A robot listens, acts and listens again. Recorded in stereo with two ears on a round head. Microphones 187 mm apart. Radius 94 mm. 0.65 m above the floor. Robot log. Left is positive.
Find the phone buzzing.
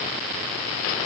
cmd idle
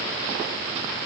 cmd idle
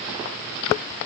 end: I can't make out a phone buzzing.